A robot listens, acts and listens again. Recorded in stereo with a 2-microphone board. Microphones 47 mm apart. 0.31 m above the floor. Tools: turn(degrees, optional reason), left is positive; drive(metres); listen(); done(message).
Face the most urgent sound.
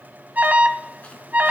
turn(degrees=-40, reason="The alarm: about 40° right or 140° right.")
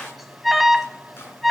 done("Found it: an alarm, straight ahead, 1 to 2 m away.")